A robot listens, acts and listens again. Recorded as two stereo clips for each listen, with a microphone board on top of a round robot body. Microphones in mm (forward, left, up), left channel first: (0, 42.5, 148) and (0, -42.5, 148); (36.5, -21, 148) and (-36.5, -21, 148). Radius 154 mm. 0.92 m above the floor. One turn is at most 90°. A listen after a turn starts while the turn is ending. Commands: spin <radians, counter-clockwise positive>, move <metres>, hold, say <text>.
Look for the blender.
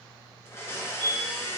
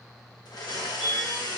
spin 0.52
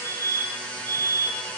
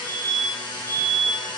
spin 0.26
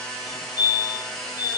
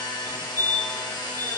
say Facing the blender.